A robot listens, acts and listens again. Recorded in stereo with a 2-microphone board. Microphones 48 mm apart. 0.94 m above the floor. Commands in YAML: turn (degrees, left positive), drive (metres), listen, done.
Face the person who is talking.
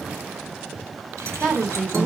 turn: -30
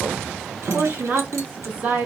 turn: -145
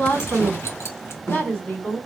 turn: 35
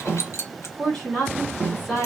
turn: 10
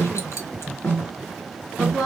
done: "Found it: a woman speaking, straight ahead, 2 to 4 m away."